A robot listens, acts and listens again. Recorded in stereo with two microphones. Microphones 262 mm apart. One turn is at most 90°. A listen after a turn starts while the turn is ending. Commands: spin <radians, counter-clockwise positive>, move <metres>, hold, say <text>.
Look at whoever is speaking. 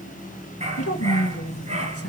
spin 1.05
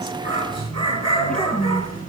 say Facing the woman speaking.